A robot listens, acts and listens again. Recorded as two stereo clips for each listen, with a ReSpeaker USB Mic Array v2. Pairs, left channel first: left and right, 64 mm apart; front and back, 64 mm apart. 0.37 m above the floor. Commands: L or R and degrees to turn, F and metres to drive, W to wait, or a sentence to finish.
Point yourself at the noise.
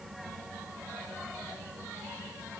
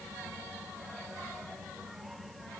W
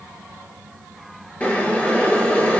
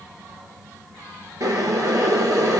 L155
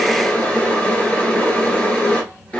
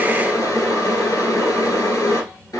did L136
L20
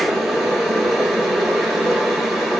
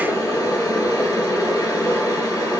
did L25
Facing the boiling, 1 to 2 m away.